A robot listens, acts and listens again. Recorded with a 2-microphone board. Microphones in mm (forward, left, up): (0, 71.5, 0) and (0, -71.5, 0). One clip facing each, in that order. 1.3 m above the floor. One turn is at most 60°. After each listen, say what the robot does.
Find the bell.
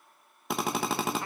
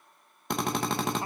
Keep listening.
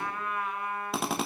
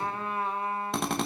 Keep listening.
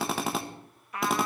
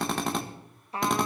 I can't make out a bell, only a drill and a trumpet.